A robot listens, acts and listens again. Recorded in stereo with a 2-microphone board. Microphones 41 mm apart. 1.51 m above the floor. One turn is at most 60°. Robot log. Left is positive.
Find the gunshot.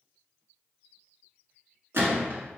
note: The gunshot: about 65° right or 115° right.
cmd yaw -60
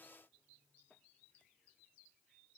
cmd idle
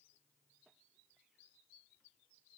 end: I heard a gunshot, but can't make it out now. It was about 5° right or 55° right.